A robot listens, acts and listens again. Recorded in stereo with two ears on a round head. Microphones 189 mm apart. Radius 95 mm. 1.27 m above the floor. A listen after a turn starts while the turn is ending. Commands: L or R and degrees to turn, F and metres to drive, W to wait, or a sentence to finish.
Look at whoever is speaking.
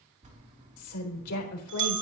L90
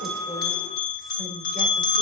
W
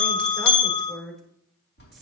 Found it: a woman speaking, straight ahead, 2 to 4 m away.